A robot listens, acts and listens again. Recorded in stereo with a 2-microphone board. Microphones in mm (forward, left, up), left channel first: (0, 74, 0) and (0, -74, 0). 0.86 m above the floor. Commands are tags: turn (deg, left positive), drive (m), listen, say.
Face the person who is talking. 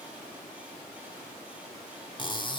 <listen/>
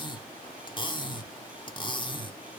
<listen/>
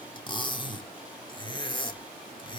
<say>I can't make out anyone speaking, only cutlery clinking.</say>